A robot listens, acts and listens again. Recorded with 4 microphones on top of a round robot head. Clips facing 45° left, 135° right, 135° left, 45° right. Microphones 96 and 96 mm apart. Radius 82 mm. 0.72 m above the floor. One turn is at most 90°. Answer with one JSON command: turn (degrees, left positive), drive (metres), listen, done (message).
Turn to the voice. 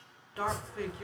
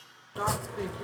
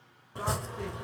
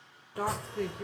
{"turn": -65}
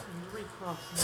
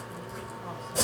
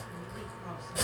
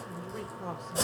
{"turn": -15}
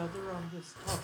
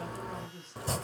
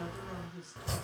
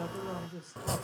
{"done": "Found it: a man speaking, straight ahead, 2 to 4 m away."}